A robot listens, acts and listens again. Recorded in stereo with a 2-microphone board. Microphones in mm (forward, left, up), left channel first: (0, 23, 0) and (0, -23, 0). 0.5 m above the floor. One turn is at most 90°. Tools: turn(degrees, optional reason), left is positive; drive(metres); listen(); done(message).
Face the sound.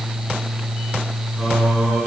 turn(degrees=30)
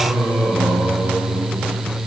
turn(degrees=90, reason="So it is at 150° left.")
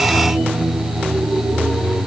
turn(degrees=60, reason="The singing is now 60° left.")
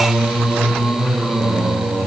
done("Found it: singing, straight ahead, over 4 m away.")